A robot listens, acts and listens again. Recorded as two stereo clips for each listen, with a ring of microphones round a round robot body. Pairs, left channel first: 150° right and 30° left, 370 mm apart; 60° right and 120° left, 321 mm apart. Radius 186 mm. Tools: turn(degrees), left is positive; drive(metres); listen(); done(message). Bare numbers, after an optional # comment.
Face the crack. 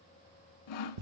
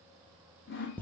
listen()
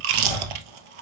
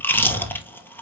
listen()
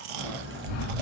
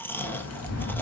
# The crack: 25° right.
turn(-25)
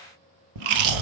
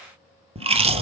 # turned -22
done("Facing where the crack came from. I can't hear it now.")